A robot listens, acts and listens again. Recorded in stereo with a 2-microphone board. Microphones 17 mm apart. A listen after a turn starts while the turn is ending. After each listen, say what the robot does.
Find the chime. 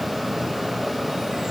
Keep listening.
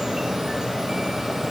Keep listening.
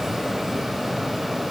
I can't make out a chime to turn to.